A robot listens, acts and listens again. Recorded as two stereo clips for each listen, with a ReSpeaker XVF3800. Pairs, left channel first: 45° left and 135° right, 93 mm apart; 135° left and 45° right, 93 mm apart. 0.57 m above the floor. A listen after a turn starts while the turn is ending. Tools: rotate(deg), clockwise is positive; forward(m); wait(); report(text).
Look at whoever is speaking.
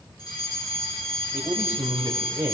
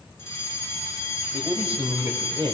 rotate(70)
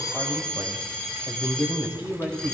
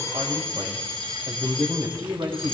rotate(20)
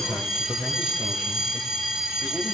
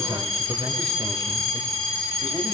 report("Found it: a man speaking, straight ahead, 2 to 4 m away.")